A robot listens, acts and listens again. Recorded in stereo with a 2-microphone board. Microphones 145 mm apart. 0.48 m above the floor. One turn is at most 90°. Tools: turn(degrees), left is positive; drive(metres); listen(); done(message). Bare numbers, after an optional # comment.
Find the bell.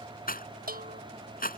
turn(-90)
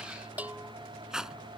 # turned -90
# So it is at 10° right.
turn(-10)
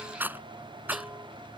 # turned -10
listen()
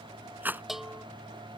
done("Found it: a bell, straight ahead.")